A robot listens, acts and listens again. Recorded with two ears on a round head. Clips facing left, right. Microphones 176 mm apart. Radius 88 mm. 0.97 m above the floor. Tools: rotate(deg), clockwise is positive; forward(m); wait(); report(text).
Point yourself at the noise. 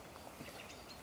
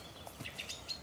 wait()
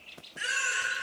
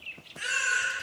rotate(-30)
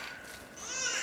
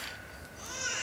rotate(-140)
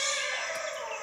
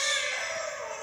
rotate(20)
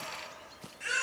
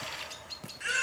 report("Found it: a baby crying, straight ahead, 1 to 2 m away.")